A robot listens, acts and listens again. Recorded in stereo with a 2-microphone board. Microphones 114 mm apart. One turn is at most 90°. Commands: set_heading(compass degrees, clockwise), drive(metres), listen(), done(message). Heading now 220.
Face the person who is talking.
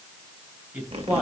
set_heading(250)
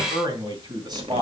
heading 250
set_heading(340)
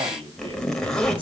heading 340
set_heading(35)
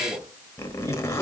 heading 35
set_heading(70)
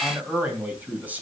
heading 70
set_heading(85)
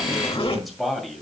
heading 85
done("Found it: a man speaking, straight ahead.")